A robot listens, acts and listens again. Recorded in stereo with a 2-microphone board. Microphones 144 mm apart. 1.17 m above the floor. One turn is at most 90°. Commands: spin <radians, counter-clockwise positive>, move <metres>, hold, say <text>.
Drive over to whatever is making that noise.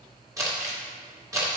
spin -0.35
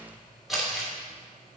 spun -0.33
move 1.0
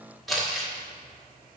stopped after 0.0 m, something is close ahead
say Blocked. The crumpling is further on, straight ahead.